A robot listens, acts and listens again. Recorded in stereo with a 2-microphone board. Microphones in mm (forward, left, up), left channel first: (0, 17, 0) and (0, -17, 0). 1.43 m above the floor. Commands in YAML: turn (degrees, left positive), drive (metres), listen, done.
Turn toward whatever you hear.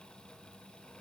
listen: true
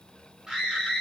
turn: -15
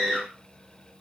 turn: -150
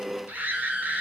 turn: -55
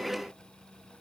listen: true
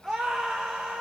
done: "Found it: a scream, straight ahead."